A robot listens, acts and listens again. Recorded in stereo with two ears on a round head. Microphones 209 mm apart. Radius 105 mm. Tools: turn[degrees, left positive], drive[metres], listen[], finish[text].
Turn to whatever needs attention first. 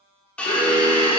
Thought: The alarm: about 20° left or 160° left.
Action: turn[20]
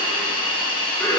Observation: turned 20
Action: finish[Facing the alarm, 1 to 2 m away.]